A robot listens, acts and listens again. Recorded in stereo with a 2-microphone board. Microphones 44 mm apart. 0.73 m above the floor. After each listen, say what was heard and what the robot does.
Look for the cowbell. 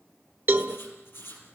The cowbell: about 55° right or 125° right. Turn 55° right.
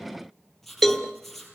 Facing the cowbell.